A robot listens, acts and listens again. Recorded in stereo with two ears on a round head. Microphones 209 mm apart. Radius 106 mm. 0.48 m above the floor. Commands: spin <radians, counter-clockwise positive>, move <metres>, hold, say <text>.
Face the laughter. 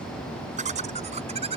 spin -0.52
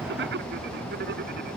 spin -2.36
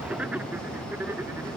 spin -0.17
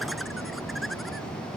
hold
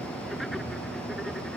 hold
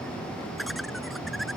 say Found it: laughter, straight ahead.